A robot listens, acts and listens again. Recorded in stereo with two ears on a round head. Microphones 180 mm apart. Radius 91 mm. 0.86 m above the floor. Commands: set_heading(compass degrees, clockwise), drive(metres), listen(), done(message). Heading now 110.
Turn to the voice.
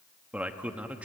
set_heading(140)
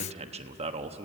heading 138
set_heading(283)
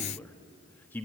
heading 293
set_heading(283)
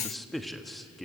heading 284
done("Facing the man speaking, 1 to 2 m away.")